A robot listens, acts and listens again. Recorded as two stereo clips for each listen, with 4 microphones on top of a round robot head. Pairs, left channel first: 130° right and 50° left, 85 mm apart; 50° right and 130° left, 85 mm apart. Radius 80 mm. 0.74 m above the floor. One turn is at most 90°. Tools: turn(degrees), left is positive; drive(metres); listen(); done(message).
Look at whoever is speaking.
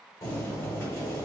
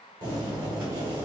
listen()
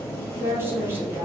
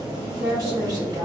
turn(degrees=90)
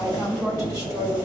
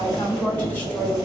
turn(degrees=20)
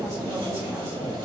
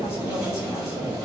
listen()
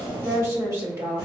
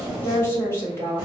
done("Found it: a woman speaking, straight ahead, 1 to 2 m away.")